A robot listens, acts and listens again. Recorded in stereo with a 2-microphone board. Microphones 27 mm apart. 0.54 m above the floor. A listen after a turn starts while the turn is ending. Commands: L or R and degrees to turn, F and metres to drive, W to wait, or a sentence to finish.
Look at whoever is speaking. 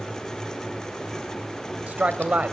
R70
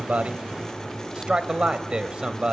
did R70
R30
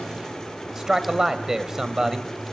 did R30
R15
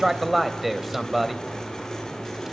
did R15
Facing the man speaking, 2 to 4 m away.